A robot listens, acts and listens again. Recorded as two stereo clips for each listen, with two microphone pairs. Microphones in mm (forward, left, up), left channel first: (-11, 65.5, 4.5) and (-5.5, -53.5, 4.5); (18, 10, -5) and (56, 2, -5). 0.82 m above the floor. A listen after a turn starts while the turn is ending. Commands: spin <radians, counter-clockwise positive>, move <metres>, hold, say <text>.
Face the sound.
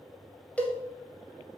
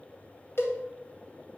spin 2.97
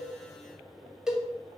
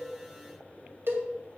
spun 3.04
say Facing the cowbell, 1 to 2 m away.